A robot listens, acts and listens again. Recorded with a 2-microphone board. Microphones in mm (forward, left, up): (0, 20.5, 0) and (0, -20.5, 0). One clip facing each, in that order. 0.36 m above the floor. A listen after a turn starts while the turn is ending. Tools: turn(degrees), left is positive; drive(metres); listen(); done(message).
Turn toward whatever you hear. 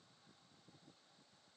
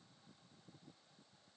listen()
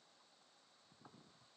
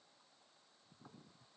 listen()
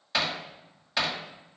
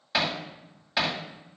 turn(degrees=-30)
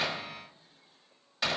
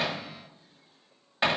turn(degrees=-140)
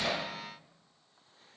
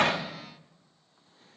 listen()
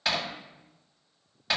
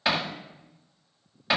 turn(degrees=-10)
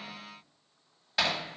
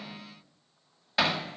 done("Found it: hammering, straight ahead.")